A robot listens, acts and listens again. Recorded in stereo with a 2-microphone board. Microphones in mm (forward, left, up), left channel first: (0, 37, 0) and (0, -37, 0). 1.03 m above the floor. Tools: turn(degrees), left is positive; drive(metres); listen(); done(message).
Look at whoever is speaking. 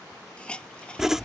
listen()
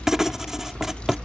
listen()
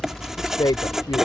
turn(degrees=90)
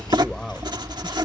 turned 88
listen()
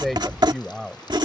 done("Facing the man speaking.")